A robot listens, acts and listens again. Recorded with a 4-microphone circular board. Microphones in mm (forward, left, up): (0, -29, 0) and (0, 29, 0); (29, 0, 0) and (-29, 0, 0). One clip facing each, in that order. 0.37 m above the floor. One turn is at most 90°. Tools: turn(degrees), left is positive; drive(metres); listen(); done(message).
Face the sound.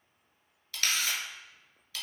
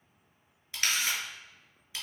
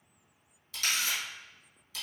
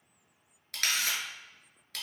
turn(degrees=90)
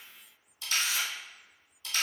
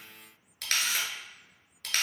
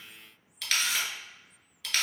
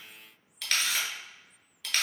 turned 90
turn(degrees=90)
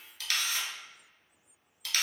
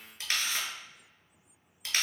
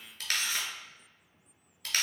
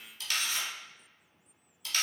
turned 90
turn(degrees=25)
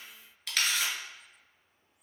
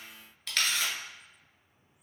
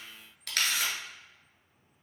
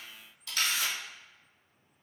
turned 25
done("Found it: a camera shutter, straight ahead.")